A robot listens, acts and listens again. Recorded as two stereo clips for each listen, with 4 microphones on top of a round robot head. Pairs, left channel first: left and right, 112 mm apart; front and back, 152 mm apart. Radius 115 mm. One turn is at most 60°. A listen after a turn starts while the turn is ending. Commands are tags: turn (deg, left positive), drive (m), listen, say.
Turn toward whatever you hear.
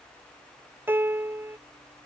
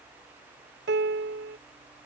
<turn deg="-60"/>
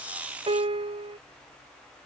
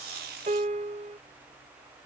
<turn deg="-60"/>
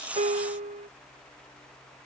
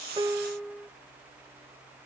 <turn deg="-60"/>
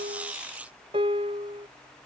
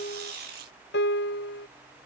<turn deg="-30"/>
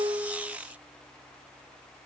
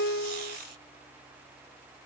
<turn deg="10"/>
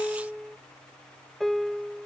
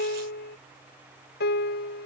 <say>Found it: a piano, straight ahead.</say>